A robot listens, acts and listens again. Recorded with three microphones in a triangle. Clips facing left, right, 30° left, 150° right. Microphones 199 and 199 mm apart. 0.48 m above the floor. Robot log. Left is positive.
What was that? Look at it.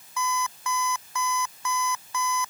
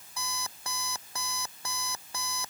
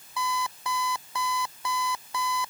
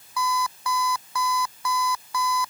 note: The alarm clock: 35° right.
cmd yaw -35
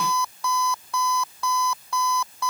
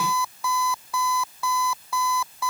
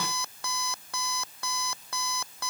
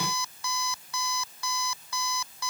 end: Facing the alarm clock.